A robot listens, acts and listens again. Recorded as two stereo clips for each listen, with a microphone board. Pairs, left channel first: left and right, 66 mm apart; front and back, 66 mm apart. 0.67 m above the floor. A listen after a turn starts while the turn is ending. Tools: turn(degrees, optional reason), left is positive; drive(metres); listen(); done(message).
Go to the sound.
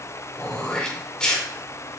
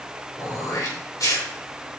turn(degrees=15, reason="The throat clearing: 15° left.")
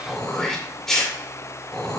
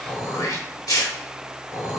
turn(degrees=10, reason="The throat clearing is now 10° left.")
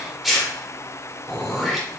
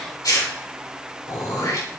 drive(metres=1.0)
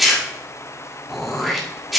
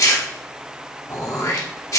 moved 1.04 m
drive(metres=1.0)
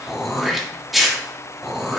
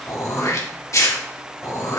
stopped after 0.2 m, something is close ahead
done("Arrived at the throat clearing, straight ahead.")